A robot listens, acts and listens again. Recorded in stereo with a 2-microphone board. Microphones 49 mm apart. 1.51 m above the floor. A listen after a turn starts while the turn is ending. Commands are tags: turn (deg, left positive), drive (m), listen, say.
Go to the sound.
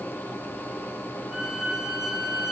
<turn deg="-30"/>
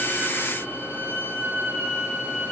<turn deg="-135"/>
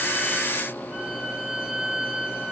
<turn deg="-25"/>
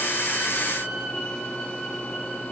<turn deg="15"/>
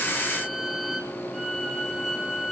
<drive m="1.0"/>
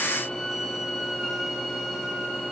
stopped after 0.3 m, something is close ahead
<say>Something is in my way. I am facing the violin but have not reached it.</say>